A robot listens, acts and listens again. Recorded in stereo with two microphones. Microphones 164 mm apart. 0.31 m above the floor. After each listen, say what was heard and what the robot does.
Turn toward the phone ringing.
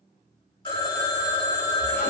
The phone ringing: about 30° left or 150° left. Turn 30° left.
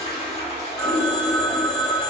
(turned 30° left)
Facing the phone ringing, under 1 m away.